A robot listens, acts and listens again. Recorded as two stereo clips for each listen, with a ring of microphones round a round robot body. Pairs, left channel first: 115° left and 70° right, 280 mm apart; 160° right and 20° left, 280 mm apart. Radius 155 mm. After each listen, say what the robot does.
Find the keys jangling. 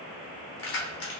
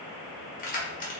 Turn 145° left.
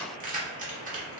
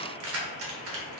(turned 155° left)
Turn 10° right.
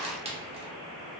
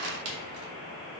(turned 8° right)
Found it: keys jangling, straight ahead, under 1 m away.